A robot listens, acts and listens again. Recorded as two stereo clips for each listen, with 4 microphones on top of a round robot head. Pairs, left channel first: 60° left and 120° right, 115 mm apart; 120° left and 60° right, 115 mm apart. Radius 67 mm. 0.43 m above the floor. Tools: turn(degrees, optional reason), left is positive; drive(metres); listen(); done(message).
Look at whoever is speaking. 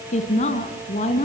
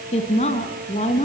turn(degrees=90, reason="The woman speaking: 90° left.")
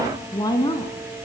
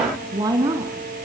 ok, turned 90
done("Found it: a woman speaking, straight ahead, over 4 m away.")